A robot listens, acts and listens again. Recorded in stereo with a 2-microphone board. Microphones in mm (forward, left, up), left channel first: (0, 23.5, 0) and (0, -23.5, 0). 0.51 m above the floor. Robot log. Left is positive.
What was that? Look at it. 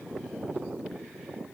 cmd idle
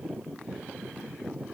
cmd idle
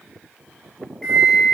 cmd yaw +30
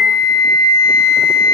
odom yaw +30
note: So it is at 15° right.
cmd yaw -15
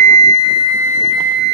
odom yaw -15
end: Found it: a flute, straight ahead, 2 to 4 m away.